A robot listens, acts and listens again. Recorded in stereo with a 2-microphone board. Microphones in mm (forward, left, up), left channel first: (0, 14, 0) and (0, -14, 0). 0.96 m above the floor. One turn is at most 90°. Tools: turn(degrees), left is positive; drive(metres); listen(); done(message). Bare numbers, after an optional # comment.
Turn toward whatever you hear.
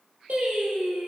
# The singing: about 65° right or 115° right.
turn(-65)
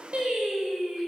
# So it is at 55° right.
turn(-55)
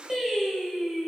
# The singing is now 10° right.
turn(-10)
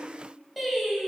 done("Found it: singing, straight ahead.")